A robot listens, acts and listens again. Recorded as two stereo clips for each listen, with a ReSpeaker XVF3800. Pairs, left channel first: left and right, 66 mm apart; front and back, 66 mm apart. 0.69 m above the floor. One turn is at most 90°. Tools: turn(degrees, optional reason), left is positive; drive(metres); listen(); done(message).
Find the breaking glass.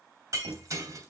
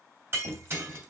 turn(degrees=-90, reason="The breaking glass: 130° right.")
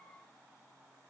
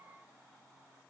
turn(degrees=-40, reason="Nothing new. It was at 40° right.")
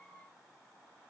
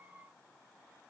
done("Facing where the breaking glass came from. I can't hear it now.")